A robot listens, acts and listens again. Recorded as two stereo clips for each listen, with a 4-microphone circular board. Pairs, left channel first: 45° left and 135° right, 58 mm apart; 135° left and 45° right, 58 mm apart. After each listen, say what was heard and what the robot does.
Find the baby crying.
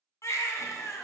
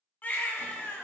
The baby crying: 75° left. Turn 75° left.
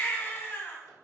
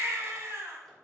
Found it: a baby crying, straight ahead, under 1 m away.